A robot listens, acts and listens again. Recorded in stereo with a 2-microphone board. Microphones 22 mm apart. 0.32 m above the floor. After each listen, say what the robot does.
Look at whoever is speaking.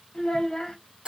Turn 45° left.
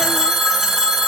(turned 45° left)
Keep listening.
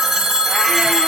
Keep listening.
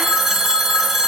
I heard a child speaking, but can't make it out now. It was about straight ahead or 90° left.